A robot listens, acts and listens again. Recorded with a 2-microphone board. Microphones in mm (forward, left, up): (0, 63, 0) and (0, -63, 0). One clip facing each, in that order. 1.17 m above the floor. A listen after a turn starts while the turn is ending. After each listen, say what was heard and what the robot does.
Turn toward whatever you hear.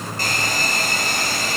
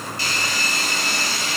The hair dryer: about 50° left or 130° left. Turn 50° left.
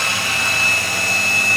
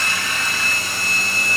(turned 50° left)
So it is at 80° left. Turn 80° left.
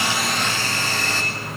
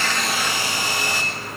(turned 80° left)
The hair dryer is now 15° right. Turn 15° right.
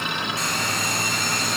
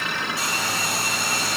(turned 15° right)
Facing the hair dryer, over 4 m away.